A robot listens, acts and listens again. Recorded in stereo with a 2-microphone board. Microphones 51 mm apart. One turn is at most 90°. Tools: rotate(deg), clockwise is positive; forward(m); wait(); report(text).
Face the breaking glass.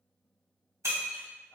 rotate(90)
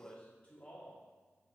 report("I heard breaking glass from this way, but can't make it out now.")